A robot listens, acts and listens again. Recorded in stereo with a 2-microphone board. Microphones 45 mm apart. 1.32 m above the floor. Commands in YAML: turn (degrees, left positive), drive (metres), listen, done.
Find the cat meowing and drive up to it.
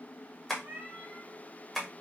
turn: -45
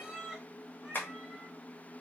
turn: -10
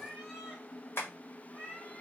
drive: 1.0
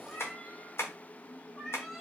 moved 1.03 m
drive: 1.0
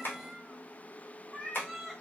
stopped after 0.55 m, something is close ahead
done: "I am next to the cat meowing."